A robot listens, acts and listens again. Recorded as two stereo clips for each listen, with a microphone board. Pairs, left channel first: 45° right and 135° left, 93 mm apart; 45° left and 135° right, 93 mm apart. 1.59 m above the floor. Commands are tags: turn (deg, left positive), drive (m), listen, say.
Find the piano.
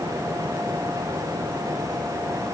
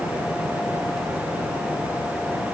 <listen/>
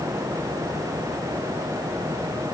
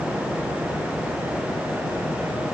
<listen/>
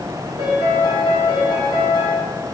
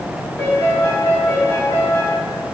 <turn deg="-15"/>
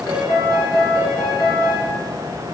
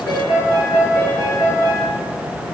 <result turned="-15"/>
<say>Found it: a piano, straight ahead, 2 to 4 m away.</say>